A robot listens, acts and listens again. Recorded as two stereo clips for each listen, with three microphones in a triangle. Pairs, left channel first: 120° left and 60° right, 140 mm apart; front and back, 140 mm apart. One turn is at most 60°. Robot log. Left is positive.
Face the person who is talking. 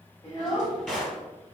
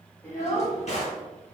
note: The child speaking: 70° left.
cmd yaw +60
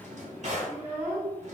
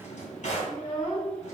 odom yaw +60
end: Found it: a child speaking, straight ahead.